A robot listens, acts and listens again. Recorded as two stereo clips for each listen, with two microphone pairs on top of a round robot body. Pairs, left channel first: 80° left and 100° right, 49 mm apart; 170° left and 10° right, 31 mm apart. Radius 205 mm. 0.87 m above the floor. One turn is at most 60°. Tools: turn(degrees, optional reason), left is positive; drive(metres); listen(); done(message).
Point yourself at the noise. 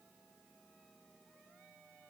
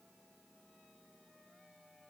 listen()
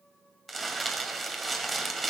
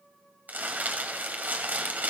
turn(degrees=-10, reason="The crumpling: 10° right.")
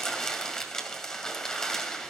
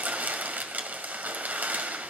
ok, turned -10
done("Facing the crumpling, 2 to 4 m away.")